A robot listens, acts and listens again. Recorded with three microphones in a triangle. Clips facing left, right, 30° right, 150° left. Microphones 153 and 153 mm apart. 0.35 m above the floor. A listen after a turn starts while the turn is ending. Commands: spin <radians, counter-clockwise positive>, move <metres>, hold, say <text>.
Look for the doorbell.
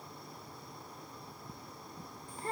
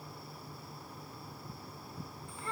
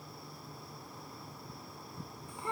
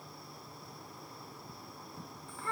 hold
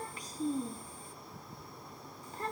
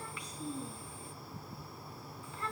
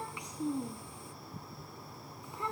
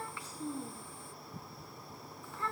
hold
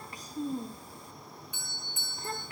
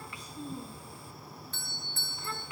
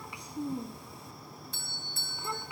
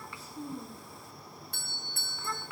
spin 2.88
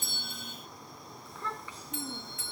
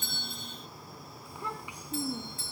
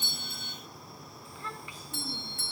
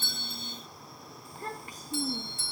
spin -0.70
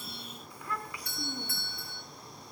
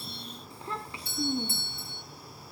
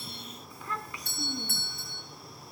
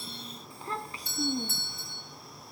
spin -0.52
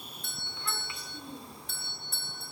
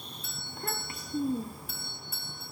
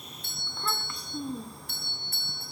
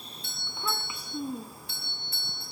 say Found it: a doorbell, straight ahead, 2 to 4 m away.